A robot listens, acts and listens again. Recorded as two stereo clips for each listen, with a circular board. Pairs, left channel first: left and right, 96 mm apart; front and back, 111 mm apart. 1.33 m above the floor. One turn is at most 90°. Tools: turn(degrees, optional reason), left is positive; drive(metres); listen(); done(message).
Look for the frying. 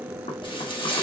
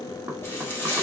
turn(degrees=65, reason="The frying: 65° left.")
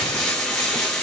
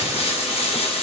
turn(degrees=10, reason="The frying is now 10° left.")
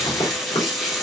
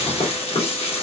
done("Found it: frying, straight ahead.")